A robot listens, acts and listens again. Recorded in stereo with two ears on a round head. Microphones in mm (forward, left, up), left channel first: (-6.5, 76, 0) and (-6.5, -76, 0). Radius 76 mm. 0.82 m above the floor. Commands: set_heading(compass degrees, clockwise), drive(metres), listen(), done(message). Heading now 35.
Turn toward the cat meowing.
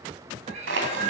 set_heading(80)
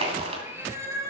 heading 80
set_heading(100)
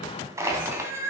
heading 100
set_heading(115)
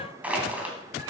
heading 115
listen()
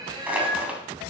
set_heading(140)
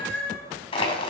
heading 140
done("Found it: a cat meowing, straight ahead.")